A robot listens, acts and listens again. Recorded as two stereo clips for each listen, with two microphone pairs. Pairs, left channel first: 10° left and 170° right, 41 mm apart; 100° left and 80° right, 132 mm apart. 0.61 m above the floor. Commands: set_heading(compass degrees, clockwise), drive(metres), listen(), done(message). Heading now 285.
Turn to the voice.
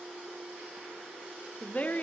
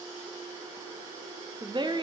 set_heading(315)
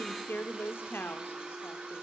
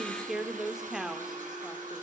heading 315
done("Found it: a woman speaking, straight ahead.")